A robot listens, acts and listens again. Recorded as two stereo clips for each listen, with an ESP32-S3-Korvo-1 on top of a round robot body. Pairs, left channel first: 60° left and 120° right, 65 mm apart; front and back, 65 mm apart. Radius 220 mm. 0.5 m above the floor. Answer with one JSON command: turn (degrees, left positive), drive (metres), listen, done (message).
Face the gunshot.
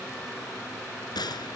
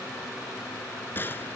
{"turn": 60}
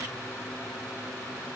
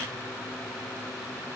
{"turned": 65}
{"done": "Facing where the gunshot came from. I can't hear it now."}